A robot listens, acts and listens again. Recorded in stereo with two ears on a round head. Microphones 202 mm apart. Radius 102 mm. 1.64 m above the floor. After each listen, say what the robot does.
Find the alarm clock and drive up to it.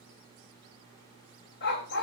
Keep listening.
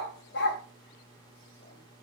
Keep listening.
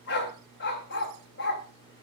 I can't make out an alarm clock, only a dog barking.